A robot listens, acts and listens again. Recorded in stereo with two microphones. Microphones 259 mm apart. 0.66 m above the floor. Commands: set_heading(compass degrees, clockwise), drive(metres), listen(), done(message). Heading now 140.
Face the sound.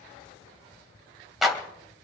set_heading(110)
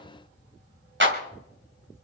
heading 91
set_heading(141)
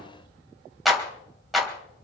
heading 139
done("Facing the clap, 2 to 4 m away.")